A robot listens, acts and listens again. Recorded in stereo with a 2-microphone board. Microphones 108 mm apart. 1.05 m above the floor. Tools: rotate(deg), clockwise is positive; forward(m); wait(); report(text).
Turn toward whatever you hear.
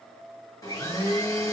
rotate(-30)
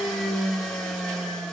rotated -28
report("Facing the blender, 1 to 2 m away.")